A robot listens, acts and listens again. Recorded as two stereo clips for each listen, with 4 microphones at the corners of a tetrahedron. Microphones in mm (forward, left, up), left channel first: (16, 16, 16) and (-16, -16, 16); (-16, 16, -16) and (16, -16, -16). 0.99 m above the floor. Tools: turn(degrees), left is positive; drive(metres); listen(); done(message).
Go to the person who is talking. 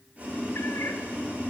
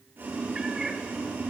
listen()
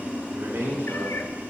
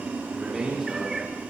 turn(degrees=-130)
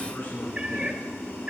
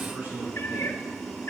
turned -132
listen()
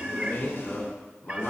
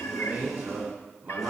drive(metres=1.0)
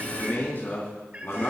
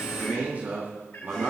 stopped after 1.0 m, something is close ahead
done("Blocked. The man speaking is further on, straight ahead.")